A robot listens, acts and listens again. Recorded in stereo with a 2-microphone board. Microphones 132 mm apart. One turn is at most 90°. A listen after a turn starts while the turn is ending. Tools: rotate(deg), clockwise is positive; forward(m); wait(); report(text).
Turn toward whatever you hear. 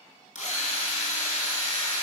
rotate(-65)
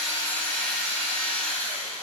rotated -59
rotate(-10)
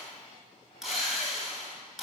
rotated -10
report("Facing the drill.")